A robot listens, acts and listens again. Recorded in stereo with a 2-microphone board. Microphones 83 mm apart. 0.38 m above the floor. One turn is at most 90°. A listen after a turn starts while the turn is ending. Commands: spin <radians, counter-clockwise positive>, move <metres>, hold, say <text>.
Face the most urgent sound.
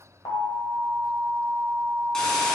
spin 0.96
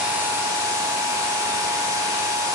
hold
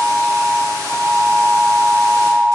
spin 0.96
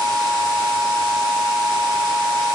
say Found it: an alarm, straight ahead.